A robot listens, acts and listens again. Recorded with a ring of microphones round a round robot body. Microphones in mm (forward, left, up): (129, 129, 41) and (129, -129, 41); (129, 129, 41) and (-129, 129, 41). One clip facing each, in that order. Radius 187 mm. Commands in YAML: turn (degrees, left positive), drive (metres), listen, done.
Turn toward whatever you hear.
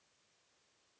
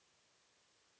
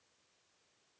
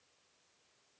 listen: true
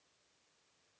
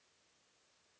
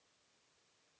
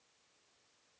listen: true
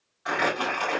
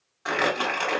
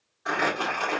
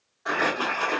turn: -85
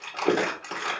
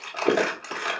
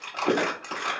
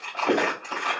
done: "Found it: crumpling, straight ahead."